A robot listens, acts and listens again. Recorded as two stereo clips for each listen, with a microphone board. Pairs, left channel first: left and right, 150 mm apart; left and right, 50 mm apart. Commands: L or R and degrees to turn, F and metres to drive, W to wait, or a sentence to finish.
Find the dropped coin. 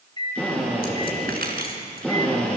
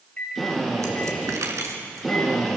R90
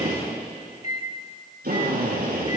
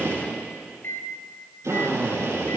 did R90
I heard a dropped coin from this way, but can't make it out now.